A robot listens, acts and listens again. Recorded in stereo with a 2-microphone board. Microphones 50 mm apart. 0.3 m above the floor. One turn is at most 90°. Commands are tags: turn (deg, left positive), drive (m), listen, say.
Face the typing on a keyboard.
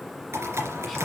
<turn deg="-70"/>
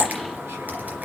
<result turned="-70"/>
<turn deg="-35"/>
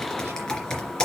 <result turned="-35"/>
<turn deg="15"/>
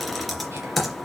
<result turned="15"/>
<say>Facing the typing on a keyboard.</say>